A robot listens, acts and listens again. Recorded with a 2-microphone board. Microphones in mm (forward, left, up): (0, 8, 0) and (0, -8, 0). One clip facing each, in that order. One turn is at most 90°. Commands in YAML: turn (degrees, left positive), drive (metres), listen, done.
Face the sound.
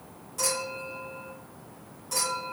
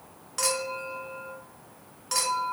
turn: -60
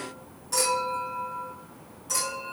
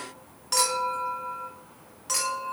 turn: -50
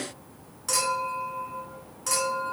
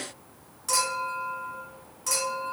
turn: 20
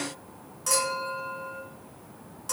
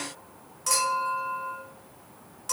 done: "Found it: a clink, straight ahead, 1 to 2 m away."